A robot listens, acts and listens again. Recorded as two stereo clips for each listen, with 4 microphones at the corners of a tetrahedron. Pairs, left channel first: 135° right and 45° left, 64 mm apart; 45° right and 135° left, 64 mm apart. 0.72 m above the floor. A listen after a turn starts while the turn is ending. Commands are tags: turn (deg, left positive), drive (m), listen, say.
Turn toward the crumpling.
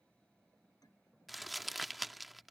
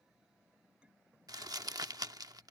<turn deg="135"/>
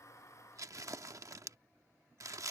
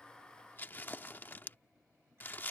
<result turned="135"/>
<turn deg="10"/>
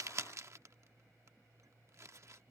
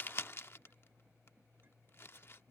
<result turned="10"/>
<say>Facing the crumpling.</say>